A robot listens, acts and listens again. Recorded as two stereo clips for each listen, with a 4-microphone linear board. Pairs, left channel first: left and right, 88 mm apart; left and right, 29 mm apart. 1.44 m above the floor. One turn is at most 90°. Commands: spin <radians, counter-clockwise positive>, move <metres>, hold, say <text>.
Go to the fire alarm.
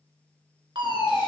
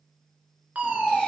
spin -1.13
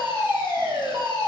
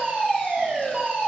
spin -0.79
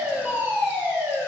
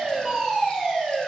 spin -0.17
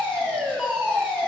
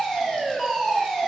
move 1.0
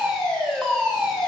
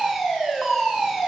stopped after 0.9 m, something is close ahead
say I am next to the fire alarm.